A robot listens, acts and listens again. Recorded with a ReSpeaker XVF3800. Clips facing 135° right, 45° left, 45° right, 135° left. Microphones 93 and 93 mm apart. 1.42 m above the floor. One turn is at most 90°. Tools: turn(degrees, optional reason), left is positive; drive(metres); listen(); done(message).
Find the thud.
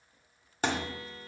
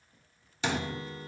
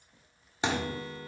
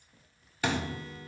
turn(degrees=-90, reason="The thud: 105° right.")
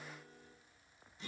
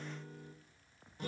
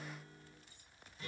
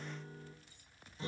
turn(degrees=-15, reason="Nothing new. It was at 15° right.")
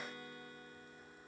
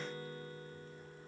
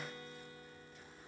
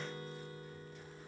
done("Facing where the thud came from. I can't hear it now.")